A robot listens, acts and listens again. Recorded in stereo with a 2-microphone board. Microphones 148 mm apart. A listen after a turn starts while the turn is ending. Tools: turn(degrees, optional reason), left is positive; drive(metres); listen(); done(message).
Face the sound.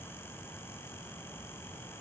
listen()
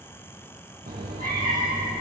turn(degrees=-75, reason="The cat meowing: about 75° right or 105° right.")
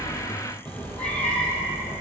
turn(degrees=15, reason="So it is at 15° left.")
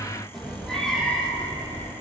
done("Facing the cat meowing, 2 to 4 m away.")